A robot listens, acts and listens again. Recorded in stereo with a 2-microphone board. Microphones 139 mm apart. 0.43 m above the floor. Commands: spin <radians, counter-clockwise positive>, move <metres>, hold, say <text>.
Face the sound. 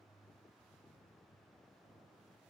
hold
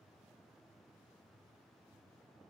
hold
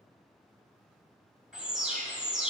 spin -0.52
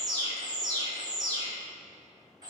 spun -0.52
spin -2.53
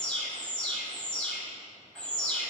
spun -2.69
spin 0.17
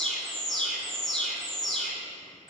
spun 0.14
say Found it: an alarm, straight ahead.